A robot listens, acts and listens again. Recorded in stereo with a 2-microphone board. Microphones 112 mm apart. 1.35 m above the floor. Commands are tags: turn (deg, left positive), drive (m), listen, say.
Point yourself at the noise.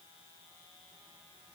<listen/>
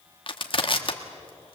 <turn deg="50"/>
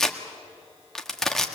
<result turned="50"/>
<say>Found it: crushing, straight ahead, 1 to 2 m away.</say>